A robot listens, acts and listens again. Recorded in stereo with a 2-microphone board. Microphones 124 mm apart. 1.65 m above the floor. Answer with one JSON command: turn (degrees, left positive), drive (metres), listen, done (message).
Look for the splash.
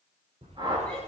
{"turn": -70}
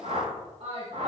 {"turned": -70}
{"listen": true}
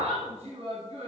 {"done": "I heard a splash, but can't make it out now. It was about straight ahead or 40° right."}